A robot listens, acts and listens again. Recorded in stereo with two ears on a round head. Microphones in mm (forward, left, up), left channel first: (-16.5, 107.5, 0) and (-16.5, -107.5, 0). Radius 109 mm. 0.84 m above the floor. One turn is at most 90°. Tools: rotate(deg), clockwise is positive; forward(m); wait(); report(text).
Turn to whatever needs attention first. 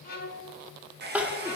rotate(30)
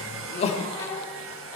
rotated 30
rotate(-25)
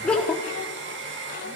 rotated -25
report("Facing the crying, 1 to 2 m away.")